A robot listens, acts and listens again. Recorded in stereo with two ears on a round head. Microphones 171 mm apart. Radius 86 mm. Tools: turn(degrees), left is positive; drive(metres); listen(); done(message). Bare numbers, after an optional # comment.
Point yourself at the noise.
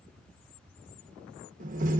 # The door slam: about 45° right or 135° right.
turn(-45)
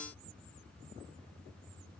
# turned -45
listen()
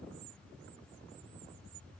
done("I heard a door slam, but can't make it out now. It was about straight ahead or 90° right.")